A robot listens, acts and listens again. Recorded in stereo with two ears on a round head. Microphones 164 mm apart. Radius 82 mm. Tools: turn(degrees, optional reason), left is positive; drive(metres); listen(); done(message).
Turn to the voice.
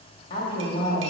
turn(degrees=30, reason="The woman speaking: about 30° left or 150° left.")
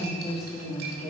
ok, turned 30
done("Found it: a woman speaking, straight ahead.")